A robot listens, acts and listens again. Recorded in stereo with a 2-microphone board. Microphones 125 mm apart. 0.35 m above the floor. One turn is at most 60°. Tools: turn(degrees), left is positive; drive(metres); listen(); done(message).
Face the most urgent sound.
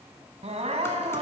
turn(degrees=-60)
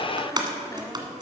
listen()
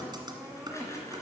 turn(degrees=-10)
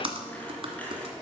listen()
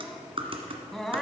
done("Found it: crying, straight ahead, 1 to 2 m away.")